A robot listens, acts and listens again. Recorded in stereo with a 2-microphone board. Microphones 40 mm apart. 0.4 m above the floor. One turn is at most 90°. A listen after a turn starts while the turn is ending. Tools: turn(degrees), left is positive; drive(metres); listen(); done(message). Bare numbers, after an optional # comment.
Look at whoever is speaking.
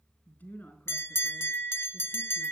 # The woman speaking: about 50° left or 130° left.
turn(50)
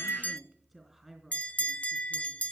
done("Found it: a woman speaking, straight ahead.")